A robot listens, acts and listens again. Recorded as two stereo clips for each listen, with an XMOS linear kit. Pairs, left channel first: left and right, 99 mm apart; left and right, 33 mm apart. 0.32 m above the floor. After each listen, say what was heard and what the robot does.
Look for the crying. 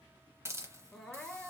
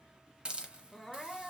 Turn 30° left.
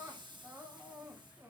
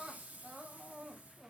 So it is at 20° right. Turn 20° right.
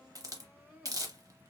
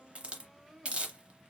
Found it: crying, straight ahead.